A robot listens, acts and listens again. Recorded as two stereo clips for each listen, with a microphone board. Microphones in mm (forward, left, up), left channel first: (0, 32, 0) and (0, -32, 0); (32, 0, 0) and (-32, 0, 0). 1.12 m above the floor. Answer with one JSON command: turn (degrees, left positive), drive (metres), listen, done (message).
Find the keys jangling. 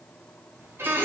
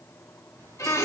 {"turn": -155}
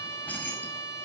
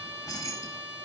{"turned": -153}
{"turn": 30}
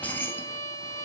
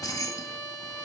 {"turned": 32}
{"turn": 35}
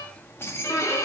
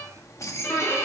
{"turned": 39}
{"turn": 40}
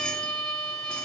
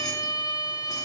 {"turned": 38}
{"listen": true}
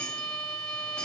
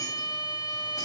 {"listen": true}
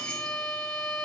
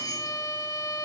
{"done": "Facing where the keys jangling came from. I can't hear it now."}